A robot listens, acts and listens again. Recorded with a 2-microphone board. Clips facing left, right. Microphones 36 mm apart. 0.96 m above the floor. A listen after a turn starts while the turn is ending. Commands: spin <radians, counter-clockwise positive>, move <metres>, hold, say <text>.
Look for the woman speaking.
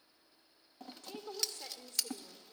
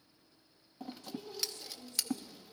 spin 1.31
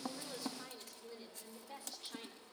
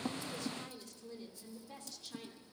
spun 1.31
spin 0.35
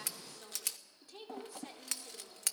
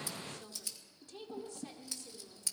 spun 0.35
spin 0.35
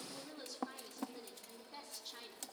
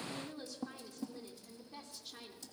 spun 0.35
say Facing the woman speaking, 2 to 4 m away.